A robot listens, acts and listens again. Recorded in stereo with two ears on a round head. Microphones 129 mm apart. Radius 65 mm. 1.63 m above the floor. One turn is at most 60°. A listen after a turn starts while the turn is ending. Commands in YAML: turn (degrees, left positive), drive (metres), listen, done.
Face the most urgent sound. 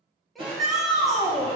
turn: 30
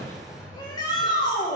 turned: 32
turn: 60
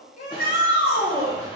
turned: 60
turn: 60
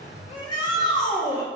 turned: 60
turn: 30
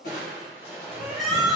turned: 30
done: "Found it: a shout, straight ahead."